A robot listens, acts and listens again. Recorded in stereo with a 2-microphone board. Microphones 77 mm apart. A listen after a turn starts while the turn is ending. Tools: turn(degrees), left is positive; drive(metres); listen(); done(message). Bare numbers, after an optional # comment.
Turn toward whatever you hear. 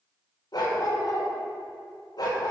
# The dog barking: about 60° left or 120° left.
turn(60)
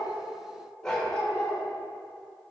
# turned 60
# So it is at 10° left.
turn(10)
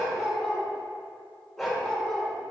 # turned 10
done("Facing the dog barking.")